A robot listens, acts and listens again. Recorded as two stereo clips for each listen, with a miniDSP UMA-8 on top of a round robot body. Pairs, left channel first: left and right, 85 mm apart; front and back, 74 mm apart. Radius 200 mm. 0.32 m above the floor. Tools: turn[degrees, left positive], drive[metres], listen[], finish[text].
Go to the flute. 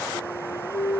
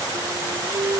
Thought: The flute: 130° left.
Action: turn[130]
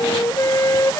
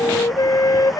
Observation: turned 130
Thought: The flute is now 40° left.
Action: turn[40]
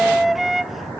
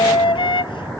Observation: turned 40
Action: drive[1.0]
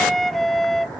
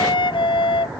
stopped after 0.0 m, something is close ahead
Action: finish[Something is in my way. I am facing the flute but have not reached it.]